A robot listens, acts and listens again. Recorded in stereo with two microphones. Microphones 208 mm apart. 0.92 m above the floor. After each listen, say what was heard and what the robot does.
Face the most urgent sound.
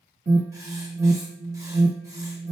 The alarm: about 55° right or 125° right. Turn 55° right.
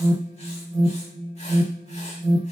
So it is at 70° right. Turn 70° right.
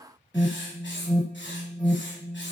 Facing the alarm.